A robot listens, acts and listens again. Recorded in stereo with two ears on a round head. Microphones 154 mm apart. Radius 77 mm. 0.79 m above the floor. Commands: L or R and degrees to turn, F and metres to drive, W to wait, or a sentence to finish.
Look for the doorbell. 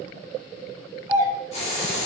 R30
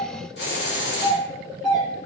Found it: a doorbell, straight ahead.